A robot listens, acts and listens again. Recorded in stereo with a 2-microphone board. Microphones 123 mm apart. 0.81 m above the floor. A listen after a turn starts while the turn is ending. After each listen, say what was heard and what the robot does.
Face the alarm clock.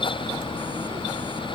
Keep listening.
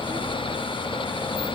Keep listening.
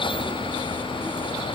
I can't make out an alarm clock to turn to.